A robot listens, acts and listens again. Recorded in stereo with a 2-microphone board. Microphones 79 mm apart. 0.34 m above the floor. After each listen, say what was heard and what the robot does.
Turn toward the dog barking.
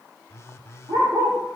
The dog barking: about 50° right or 130° right. Turn 50° right.
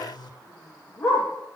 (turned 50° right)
So it is at 10° left. Turn 10° left.
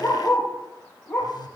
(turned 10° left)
Found it: a dog barking, straight ahead.